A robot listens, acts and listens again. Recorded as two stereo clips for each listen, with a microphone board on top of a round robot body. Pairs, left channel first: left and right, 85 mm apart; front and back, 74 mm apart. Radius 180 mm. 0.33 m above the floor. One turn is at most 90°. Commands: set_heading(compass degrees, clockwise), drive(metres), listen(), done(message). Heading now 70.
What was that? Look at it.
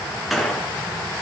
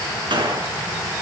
set_heading(340)
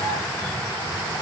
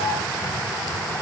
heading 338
set_heading(248)
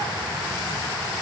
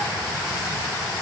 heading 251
done("I heard a gunshot from this way, but can't make it out now.")